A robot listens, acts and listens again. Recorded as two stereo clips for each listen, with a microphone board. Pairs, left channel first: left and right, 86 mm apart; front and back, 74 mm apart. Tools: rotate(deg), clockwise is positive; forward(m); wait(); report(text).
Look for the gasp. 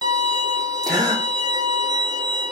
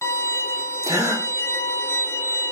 rotate(135)
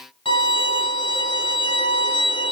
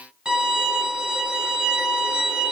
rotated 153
rotate(-20)
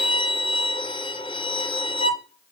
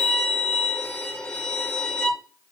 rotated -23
report("Facing where the gasp came from. I can't hear it now.")